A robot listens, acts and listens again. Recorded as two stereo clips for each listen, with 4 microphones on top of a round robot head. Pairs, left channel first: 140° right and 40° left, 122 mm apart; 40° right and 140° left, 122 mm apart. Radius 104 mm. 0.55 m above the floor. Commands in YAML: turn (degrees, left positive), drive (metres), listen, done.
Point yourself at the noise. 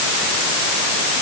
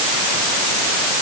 listen: true
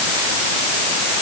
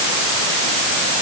listen: true
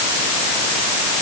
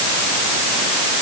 done: "I can't make out anything to turn to."